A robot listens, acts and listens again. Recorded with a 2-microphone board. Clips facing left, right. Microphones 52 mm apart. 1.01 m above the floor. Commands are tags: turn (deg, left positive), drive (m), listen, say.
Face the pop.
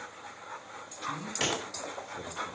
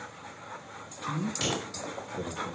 <turn deg="50"/>
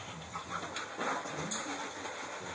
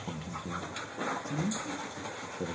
<listen/>
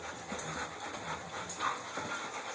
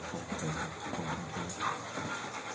<say>I heard a pop, but can't make it out now. It was about straight ahead or 80° left.</say>